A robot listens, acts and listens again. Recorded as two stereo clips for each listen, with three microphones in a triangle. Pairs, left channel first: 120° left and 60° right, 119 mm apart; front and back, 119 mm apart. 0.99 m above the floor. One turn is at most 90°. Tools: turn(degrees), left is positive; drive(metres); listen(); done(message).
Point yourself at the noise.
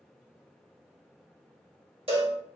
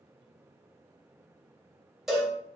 turn(degrees=-90)
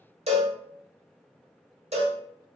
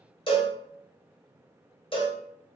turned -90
turn(degrees=-40)
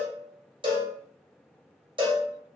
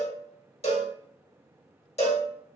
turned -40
turn(degrees=-15)
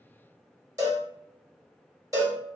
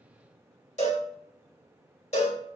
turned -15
done("Found it: a cowbell, straight ahead, 1 to 2 m away.")